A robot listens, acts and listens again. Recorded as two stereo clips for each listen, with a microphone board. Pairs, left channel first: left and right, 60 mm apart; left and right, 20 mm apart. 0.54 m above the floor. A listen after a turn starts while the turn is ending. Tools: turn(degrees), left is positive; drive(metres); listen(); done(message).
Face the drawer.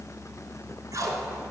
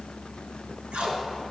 listen()
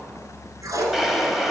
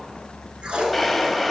turn(degrees=-30)
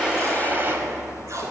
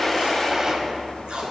turn(degrees=-145)
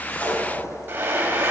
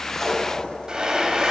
turn(degrees=-35)
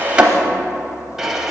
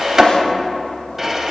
turn(degrees=-10)
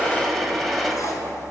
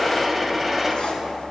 done("Facing the drawer, under 1 m away.")